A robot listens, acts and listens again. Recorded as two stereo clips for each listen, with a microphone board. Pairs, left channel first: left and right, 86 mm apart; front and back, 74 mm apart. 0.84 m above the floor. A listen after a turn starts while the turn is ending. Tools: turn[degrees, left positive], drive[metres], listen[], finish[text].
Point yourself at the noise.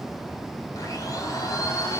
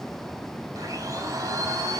Thought: The blender: 135° left.
Action: turn[135]
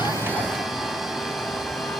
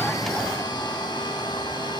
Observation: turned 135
Action: finish[Found it: a blender, straight ahead.]